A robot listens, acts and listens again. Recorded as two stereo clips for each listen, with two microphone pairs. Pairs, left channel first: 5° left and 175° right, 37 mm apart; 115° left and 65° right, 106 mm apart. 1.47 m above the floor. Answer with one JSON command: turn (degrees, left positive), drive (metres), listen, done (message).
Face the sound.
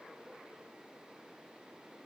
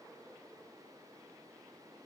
{"listen": true}
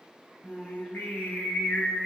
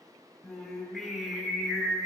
{"turn": 25}
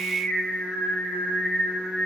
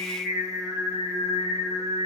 {"done": "Facing the singing."}